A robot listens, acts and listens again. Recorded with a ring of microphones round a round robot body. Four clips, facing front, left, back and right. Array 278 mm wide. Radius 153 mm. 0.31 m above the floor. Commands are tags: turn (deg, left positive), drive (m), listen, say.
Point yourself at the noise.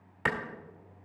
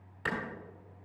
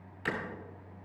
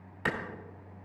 <turn deg="-25"/>
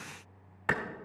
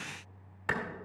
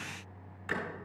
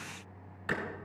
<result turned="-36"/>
<turn deg="10"/>
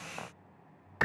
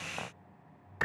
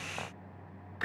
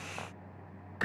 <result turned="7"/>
<say>Facing the clap, 1 to 2 m away.</say>